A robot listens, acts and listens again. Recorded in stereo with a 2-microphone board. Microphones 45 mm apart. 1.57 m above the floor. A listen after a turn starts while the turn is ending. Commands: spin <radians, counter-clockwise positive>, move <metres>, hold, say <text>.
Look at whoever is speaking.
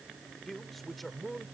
spin 0.52
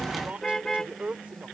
spin -0.44
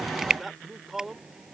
say Facing the man speaking.